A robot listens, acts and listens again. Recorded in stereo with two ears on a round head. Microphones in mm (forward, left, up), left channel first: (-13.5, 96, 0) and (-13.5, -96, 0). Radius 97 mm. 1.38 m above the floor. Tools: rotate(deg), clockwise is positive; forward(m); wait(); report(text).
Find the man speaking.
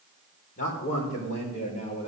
rotate(-30)
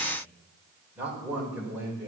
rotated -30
rotate(10)
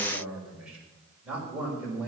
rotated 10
rotate(10)
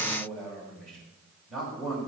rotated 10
report("Found it: a man speaking, straight ahead, over 4 m away.")